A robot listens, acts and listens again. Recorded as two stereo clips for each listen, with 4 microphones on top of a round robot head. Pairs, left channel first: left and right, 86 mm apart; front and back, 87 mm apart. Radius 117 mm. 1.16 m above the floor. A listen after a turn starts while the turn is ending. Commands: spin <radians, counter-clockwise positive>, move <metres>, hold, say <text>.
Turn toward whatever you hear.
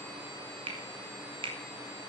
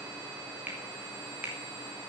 spin -1.83
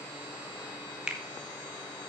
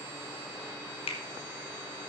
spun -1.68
spin -0.17
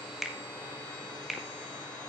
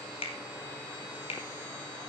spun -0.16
say Facing the finger snap, 1 to 2 m away.